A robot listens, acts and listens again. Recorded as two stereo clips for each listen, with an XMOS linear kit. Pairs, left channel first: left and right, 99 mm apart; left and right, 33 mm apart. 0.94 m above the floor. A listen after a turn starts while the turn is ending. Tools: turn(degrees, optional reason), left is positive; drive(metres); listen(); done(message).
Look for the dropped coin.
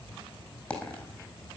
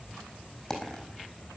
turn(degrees=30)
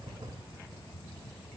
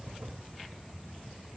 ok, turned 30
listen()
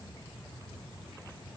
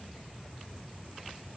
done("I heard a dropped coin, but can't make it out now. It was about 15° right or 135° left.")